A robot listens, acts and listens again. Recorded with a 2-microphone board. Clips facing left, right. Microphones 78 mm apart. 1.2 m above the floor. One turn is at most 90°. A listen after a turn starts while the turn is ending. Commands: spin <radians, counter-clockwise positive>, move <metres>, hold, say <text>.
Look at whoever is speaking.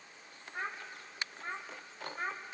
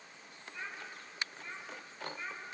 spin 0.96
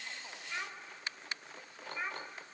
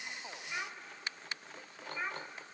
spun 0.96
say Found it: a child speaking, straight ahead, 2 to 4 m away.